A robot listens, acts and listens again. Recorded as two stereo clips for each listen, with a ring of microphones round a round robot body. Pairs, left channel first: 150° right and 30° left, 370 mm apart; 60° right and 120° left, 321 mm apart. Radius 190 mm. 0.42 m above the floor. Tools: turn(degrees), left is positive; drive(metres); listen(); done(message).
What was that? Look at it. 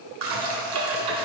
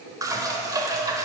turn(degrees=40)
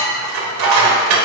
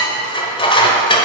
turn(degrees=15)
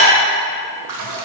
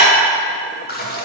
done("Facing the dishes clattering.")